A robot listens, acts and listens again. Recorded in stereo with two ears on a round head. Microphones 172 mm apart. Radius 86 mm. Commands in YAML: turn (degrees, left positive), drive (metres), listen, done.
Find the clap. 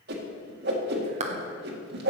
turn: -35
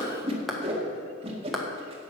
done: "Found it: a clap, straight ahead."